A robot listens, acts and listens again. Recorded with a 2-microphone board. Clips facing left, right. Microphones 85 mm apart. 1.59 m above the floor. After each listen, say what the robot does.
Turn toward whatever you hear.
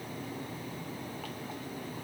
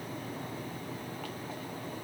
Keep listening.
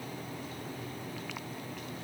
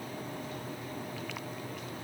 Keep listening.
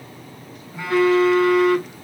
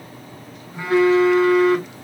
Turn 20° right.
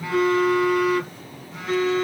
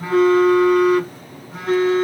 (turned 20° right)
Turn 135° right.
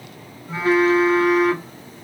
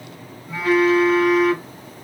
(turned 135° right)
Turn 30° left.
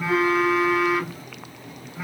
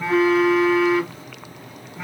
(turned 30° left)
Found it: a phone buzzing, straight ahead.